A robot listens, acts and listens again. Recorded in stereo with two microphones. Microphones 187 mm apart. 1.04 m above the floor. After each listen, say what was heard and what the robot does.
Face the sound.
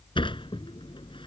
The sliding door: about 25° left or 155° left. Turn 25° left.
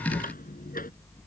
So it is at 130° left. Turn 130° left.
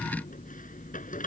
The sliding door is now 45° left. Turn 45° left.
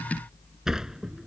Found it: a sliding door, straight ahead.